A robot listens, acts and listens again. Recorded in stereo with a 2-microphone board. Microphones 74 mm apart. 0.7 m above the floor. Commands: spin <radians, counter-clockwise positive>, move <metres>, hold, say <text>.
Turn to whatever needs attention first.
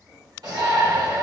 spin -1.05
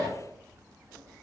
spin -0.96
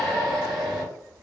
say Found it: a shout, straight ahead.